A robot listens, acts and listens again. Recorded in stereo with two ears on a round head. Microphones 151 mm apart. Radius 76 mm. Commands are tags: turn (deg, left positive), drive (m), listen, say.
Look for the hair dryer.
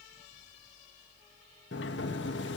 <listen/>
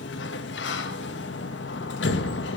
<listen/>
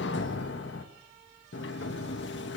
<say>I can't make out a hair dryer to turn to.</say>